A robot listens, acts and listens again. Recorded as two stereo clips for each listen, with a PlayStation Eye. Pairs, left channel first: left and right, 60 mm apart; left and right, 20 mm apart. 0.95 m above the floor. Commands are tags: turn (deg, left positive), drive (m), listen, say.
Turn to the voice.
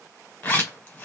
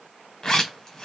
<listen/>
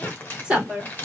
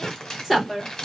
<turn deg="-20"/>
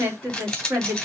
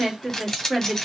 <turn deg="-145"/>
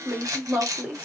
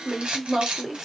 <turn deg="-25"/>
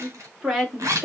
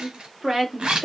<turn deg="-10"/>
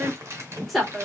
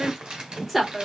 <say>Facing the woman speaking.</say>